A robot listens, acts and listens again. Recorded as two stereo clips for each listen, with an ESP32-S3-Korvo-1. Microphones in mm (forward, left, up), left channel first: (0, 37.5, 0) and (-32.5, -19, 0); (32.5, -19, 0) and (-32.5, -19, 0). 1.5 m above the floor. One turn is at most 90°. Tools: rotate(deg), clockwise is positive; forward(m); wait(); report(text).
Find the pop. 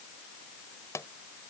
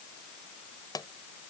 rotate(-15)
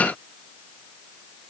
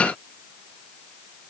report("Facing where the pop came from. I can't hear it now.")